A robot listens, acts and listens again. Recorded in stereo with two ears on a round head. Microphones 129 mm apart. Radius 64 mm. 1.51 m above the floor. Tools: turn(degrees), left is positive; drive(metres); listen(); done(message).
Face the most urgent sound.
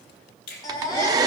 turn(degrees=30)
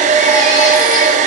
listen()
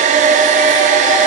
listen()
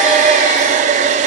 done("I heard a baby crying, but can't make it out now. It was about straight ahead or 120° left.")